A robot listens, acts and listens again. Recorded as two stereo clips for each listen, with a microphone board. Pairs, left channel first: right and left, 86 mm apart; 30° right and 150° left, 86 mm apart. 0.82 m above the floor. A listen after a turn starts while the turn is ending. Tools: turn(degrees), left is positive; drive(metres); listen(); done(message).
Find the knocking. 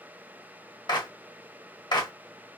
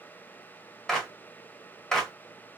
listen()
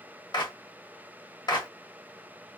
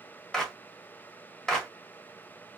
listen()
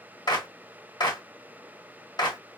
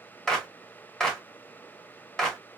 done("I can't make out knocking to turn to.")